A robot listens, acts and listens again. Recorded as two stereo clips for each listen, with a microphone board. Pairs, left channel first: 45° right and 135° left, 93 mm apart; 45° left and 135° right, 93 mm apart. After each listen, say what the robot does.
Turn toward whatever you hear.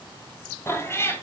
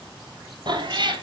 Turn 110° right.
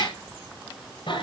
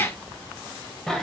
Turn 45° right.
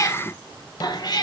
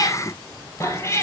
Turn 15° right.
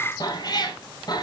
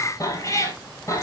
Turn 10° right.
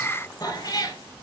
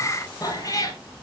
Facing the cat meowing.